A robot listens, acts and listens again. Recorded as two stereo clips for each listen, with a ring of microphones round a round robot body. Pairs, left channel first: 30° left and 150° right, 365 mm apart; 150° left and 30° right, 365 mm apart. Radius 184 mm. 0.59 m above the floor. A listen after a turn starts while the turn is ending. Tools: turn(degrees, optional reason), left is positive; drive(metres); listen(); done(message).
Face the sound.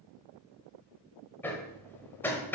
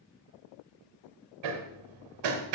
turn(degrees=-55, reason="The hammering: 55° right.")
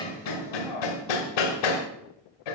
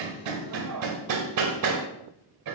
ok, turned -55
turn(degrees=10, reason="The hammering is now 10° left.")
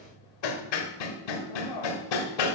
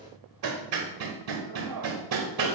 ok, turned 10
done("Found it: hammering, straight ahead.")